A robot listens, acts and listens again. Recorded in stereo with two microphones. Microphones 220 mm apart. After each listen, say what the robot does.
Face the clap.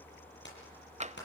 Turn 55° left.
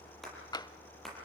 Facing the clap, over 4 m away.